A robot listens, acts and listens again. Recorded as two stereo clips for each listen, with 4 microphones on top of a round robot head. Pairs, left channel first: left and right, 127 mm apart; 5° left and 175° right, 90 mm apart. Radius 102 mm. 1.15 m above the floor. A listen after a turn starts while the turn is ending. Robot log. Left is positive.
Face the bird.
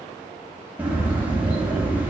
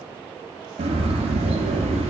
note: The bird: 170° right.
cmd yaw -170
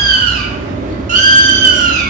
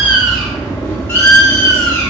note: The bird is now 75° right.
cmd yaw -75
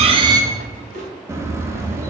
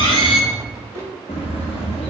note: The bird is now 20° right.
cmd yaw -20
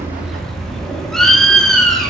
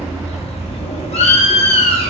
end: Facing the bird.